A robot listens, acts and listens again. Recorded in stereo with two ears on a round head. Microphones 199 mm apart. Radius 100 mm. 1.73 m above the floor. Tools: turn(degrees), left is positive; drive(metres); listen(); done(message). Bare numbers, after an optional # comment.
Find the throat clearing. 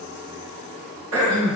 # The throat clearing: about 70° right or 110° right.
turn(-70)
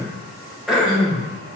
done("Found it: throat clearing, straight ahead, 2 to 4 m away.")